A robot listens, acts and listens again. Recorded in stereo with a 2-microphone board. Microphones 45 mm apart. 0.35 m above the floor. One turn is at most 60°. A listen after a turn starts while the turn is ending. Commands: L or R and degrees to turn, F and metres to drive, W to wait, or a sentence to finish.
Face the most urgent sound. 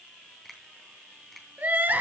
R40
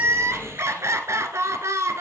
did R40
R60
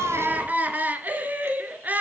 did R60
R35
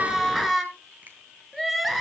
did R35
Found it: crying, straight ahead.